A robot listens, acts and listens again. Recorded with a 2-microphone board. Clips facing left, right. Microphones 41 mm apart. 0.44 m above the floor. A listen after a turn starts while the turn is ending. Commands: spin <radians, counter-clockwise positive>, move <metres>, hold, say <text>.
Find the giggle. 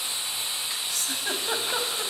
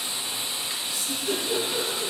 spin 1.22
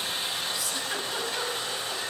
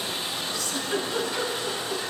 spin 0.26
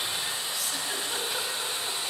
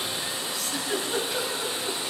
say Found it: a giggle, straight ahead, 2 to 4 m away.